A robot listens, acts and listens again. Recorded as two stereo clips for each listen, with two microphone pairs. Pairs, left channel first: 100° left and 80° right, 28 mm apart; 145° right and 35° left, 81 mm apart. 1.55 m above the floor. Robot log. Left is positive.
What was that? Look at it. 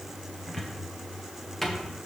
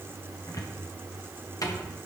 note: The cupboard door: 175° left.
cmd yaw +175
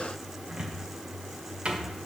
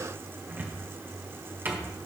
note: The cupboard door is now 30° right.
cmd yaw -30
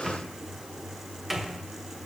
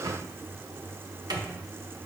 end: Facing the cupboard door, 1 to 2 m away.